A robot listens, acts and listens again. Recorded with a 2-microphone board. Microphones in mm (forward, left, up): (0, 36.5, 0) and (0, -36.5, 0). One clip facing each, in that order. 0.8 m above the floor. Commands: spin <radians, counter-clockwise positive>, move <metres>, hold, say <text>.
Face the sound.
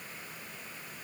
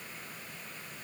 hold
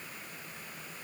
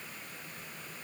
hold
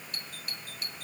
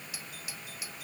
spin -0.52
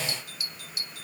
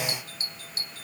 spin -2.44
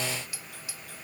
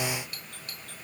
spin 0.17
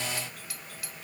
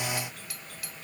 say Facing the doorbell.